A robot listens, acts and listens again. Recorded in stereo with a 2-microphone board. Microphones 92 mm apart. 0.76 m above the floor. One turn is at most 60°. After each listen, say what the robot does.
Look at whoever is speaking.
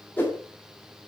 Keep listening.
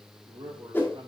Turn 60° right.
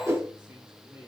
Turn 15° right.
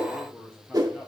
Facing the man speaking, 2 to 4 m away.